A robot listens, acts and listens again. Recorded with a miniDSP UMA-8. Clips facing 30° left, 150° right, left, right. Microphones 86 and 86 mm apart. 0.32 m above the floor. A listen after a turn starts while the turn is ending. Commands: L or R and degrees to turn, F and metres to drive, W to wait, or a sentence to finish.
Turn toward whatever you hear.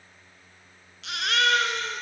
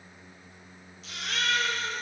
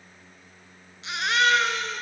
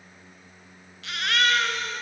L20
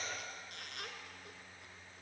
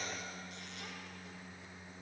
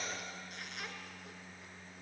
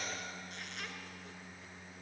W
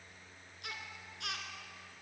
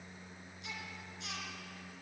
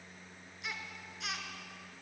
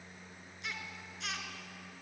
Facing the baby crying, 2 to 4 m away.